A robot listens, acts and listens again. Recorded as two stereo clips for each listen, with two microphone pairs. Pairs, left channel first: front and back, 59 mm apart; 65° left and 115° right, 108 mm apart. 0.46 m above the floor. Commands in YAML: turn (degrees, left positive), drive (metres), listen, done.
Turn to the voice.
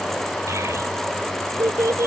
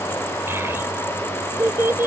turn: 180
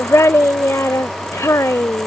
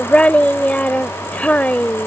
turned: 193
turn: -15
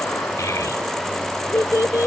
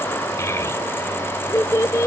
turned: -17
done: "Found it: a child speaking, straight ahead."